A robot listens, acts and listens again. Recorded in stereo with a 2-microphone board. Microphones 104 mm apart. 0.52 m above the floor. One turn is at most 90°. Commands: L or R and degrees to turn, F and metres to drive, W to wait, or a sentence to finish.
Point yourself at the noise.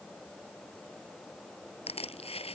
L70
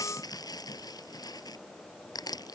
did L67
L40
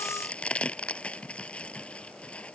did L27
L10
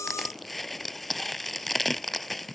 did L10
Facing the crushing.